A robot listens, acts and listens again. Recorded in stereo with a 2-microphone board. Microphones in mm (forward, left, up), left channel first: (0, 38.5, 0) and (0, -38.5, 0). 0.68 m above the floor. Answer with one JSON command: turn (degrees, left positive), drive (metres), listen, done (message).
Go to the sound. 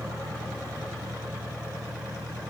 {"listen": true}
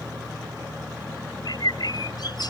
{"turn": 70}
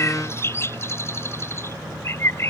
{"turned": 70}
{"turn": 35}
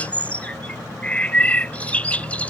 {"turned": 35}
{"turn": 20}
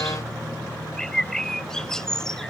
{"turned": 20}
{"drive": 1.0}
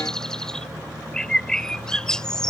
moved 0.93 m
{"turn": 10}
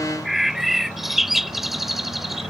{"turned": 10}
{"drive": 1.0}
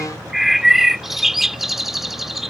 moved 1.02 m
{"drive": 1.0}
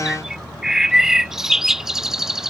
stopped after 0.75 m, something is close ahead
{"turn": -10}
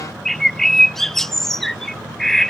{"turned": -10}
{"done": "Arrived at the bird, straight ahead."}